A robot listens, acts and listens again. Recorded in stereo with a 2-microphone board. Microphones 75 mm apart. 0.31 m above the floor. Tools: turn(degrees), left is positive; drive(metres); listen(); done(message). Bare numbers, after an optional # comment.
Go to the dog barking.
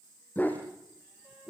# The dog barking: about 25° left or 155° left.
turn(25)
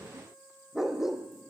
drive(1.0)
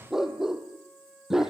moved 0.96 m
drive(1.0)
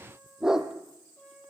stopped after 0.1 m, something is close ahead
done("Blocked. The dog barking is further on, straight ahead.")